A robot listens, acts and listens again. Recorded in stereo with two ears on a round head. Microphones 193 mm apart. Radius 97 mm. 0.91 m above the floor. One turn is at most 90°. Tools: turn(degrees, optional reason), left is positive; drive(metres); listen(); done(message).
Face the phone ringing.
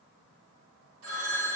turn(degrees=-70, reason="The phone ringing: about 70° right or 110° right.")
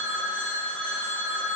done("Facing the phone ringing.")